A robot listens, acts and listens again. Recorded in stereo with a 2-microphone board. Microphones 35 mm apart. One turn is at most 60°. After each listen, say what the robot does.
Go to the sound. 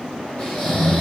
Turn 30° left.
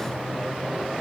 Keep listening.
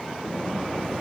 Keep listening.
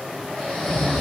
Turn 60° left.
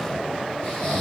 Turn 60° left.
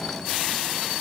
Turn 35° left.
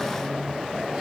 Keep listening.
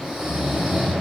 Turn 20° right.
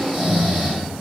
Drive 1.0 m forward.
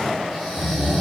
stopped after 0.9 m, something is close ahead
Arrived at the snoring, straight ahead.